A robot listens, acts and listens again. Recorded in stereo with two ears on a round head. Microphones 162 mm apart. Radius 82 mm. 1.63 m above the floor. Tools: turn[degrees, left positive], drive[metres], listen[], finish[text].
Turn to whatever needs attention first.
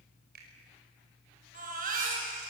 Thought: The baby crying: about 50° right or 130° right.
Action: turn[-50]
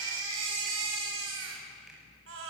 Thought: So it is at 80° right.
Action: turn[-80]
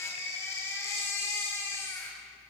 Thought: The baby crying is now 15° left.
Action: turn[15]
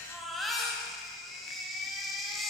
Action: finish[Facing the baby crying.]